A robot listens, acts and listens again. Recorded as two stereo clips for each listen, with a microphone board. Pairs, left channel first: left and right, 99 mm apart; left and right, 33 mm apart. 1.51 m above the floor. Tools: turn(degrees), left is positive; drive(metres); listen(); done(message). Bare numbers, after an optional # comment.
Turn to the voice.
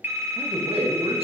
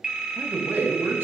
turn(-90)
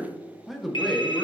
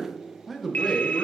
done("Facing the man speaking.")